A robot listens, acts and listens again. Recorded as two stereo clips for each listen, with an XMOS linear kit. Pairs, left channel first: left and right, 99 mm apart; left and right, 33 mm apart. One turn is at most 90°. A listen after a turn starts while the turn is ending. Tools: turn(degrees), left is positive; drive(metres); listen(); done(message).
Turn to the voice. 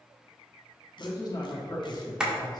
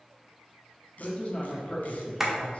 turn(degrees=45)
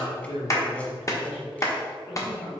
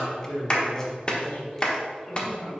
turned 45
turn(degrees=85)
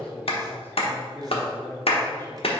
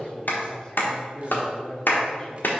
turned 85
turn(degrees=25)
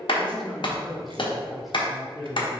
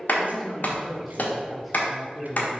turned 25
done("Found it: a man speaking, straight ahead, 1 to 2 m away.")